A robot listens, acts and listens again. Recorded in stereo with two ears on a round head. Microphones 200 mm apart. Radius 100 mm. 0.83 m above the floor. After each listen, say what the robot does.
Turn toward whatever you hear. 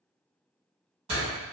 Turn 30° right.
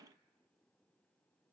Keep listening.
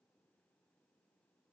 I heard a door slam, but can't make it out now. It was about straight ahead or 120° right.